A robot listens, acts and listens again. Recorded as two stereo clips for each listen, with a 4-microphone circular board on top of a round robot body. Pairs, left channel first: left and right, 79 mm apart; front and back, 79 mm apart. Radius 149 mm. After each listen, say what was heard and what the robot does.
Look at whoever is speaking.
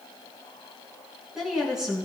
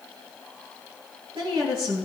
The woman speaking: 175° right. Turn 175° right.
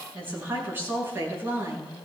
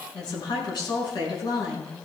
The woman speaking is now 30° right. Turn 30° right.
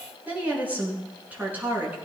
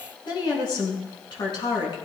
The woman speaking is now 20° right. Turn 20° right.
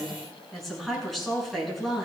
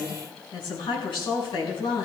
Facing the woman speaking.